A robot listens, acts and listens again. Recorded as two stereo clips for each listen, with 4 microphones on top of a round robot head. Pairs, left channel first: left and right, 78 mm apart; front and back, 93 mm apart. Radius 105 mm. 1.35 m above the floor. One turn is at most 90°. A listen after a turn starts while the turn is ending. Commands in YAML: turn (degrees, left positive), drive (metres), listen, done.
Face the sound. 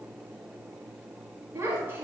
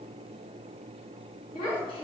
turn: -25
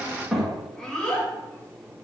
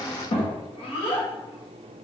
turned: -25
turn: 15
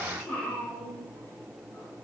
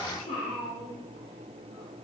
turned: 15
turn: 20
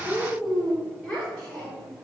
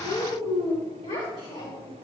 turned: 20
turn: 10
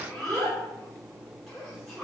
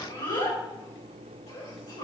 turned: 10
done: "Facing the child speaking."